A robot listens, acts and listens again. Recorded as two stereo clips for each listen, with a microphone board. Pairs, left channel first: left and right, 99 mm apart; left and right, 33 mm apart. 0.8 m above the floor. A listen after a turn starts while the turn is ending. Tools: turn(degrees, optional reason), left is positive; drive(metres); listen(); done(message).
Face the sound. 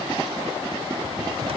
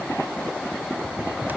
turn(degrees=-70, reason="The cupboard door: about 70° right or 110° right.")
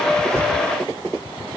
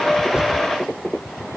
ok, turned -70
turn(degrees=-15, reason="So it is at 15° right.")
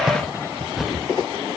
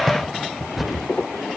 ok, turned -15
done("Found it: a cupboard door, straight ahead.")